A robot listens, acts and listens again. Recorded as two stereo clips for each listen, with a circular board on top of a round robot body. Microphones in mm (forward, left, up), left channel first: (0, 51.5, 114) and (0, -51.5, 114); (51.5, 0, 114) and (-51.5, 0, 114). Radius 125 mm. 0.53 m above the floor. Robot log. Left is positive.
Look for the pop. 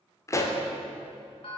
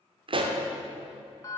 note: The pop: 150° left.
cmd yaw +150
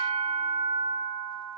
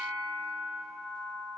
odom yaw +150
end: Facing where the pop came from. I can't hear it now.